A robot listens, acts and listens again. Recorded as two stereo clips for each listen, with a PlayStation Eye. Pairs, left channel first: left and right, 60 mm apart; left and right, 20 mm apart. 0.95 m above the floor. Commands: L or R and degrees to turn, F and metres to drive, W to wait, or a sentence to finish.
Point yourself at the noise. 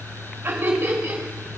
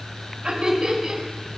R35
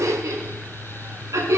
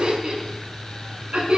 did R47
R105
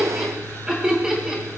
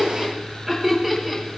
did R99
R15
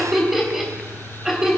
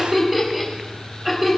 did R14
Found it: laughter, straight ahead.